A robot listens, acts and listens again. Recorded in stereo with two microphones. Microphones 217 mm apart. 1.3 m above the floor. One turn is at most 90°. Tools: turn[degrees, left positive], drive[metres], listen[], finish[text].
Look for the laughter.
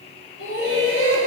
Action: turn[90]
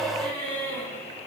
Thought: So it is at 10° left.
Action: turn[10]
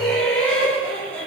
Thought: The laughter is now 10° left.
Action: turn[10]
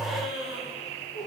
Action: finish[Facing the laughter, over 4 m away.]